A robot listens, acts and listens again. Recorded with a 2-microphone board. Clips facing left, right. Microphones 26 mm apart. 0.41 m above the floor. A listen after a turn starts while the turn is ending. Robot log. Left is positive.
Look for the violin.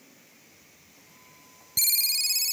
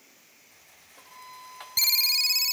note: The violin: about 55° right or 125° right.
cmd yaw -55
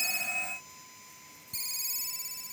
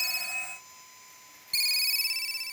cmd idle
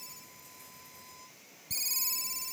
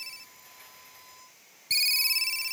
end: Found it: a violin, straight ahead.